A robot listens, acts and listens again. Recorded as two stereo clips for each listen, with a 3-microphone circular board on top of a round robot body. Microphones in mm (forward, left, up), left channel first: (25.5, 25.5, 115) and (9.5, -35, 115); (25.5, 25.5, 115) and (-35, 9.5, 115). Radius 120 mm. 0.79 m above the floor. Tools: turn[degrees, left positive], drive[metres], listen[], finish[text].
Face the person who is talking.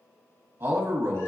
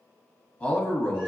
Thought: The man speaking: 55° right.
Action: turn[-55]
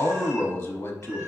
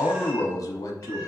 Thought: The man speaking is now 30° left.
Action: turn[30]
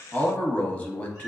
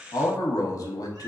Thought: The man speaking is now 15° left.
Action: turn[15]
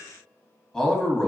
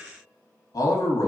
Action: finish[Facing the man speaking.]